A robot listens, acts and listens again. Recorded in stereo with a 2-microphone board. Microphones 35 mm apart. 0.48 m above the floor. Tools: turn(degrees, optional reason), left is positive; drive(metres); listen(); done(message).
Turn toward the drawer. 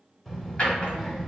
turn(degrees=30, reason="The drawer: about 30° left or 150° left.")
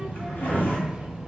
turn(degrees=120, reason="So it is at 120° left.")
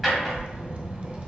done("Found it: a drawer, straight ahead.")